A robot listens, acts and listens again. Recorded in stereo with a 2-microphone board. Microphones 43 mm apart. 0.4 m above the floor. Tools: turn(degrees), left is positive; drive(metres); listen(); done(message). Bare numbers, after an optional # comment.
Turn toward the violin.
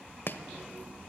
listen()
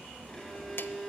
turn(30)
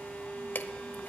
# So it is at 145° left.
turn(145)
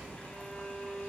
# The violin is now 35° left.
turn(35)
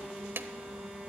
listen()
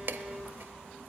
listen()
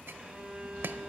# The violin is now 15° right.
turn(-15)
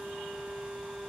done("Found it: a violin, straight ahead.")